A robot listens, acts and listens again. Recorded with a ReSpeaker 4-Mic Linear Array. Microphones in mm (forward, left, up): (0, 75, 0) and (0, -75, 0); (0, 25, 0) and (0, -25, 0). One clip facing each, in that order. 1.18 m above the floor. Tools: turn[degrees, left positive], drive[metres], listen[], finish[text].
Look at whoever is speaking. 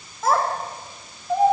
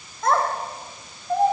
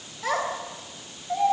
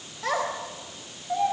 Action: turn[30]
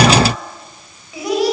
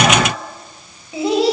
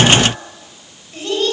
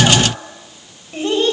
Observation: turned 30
Thought: So it is at 25° right.
Action: turn[-25]
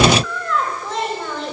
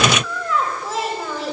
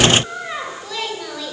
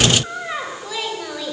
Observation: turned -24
Action: finish[Found it: a child speaking, straight ahead.]